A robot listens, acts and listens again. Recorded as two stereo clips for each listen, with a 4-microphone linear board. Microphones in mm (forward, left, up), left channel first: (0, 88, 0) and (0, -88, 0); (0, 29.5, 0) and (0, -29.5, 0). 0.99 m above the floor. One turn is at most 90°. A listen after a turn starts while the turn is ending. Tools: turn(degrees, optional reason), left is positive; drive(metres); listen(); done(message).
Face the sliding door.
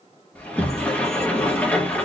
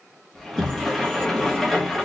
turn(degrees=30)
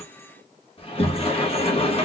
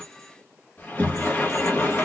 turn(degrees=90, reason="So it is at 140° left.")
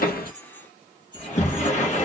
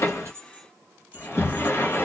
turn(degrees=50, reason="The sliding door is now 50° left.")
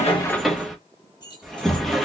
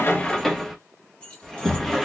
done("Facing the sliding door.")